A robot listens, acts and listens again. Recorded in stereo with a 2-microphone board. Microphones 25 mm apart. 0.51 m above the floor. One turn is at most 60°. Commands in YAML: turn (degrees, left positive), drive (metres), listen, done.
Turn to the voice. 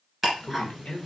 turn: 50
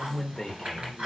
turn: 20
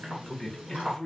turn: 10
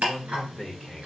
done: "Facing the man speaking."